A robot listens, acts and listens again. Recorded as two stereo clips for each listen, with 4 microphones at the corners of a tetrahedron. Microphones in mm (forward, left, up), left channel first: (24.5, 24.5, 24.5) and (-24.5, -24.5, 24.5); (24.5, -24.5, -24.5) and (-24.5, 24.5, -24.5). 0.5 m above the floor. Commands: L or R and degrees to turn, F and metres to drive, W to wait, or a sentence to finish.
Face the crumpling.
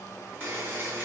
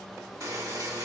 W
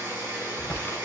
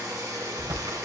L105
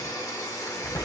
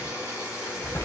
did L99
L10
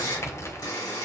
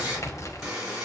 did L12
Facing the crumpling, under 1 m away.